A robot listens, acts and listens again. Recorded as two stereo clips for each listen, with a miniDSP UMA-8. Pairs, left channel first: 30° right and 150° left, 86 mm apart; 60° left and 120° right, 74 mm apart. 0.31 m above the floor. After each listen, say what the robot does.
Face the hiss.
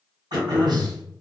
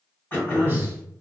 Keep listening.
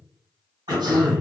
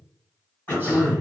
Keep listening.
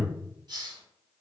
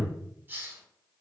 Turn 180° left.
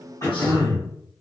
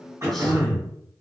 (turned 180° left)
Keep listening.
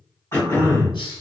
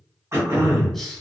Keep listening.
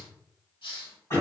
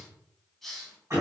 Turn 25° right.
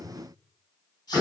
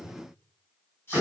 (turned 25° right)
Found it: a hiss, straight ahead, under 1 m away.